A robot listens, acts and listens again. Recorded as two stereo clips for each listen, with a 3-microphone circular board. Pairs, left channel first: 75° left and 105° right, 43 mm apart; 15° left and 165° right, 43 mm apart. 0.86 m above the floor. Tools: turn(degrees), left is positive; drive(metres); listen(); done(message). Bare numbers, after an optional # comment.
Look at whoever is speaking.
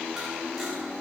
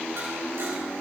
listen()
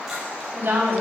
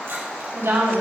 # The woman speaking: 145° right.
turn(-145)
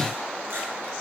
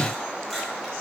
listen()
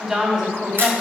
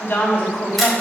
# The woman speaking is now 30° right.
turn(-30)
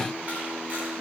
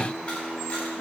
listen()
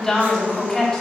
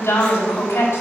# The woman speaking is now 10° right.
turn(-10)
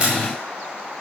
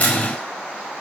listen()
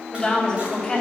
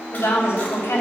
done("Found it: a woman speaking, straight ahead, over 4 m away.")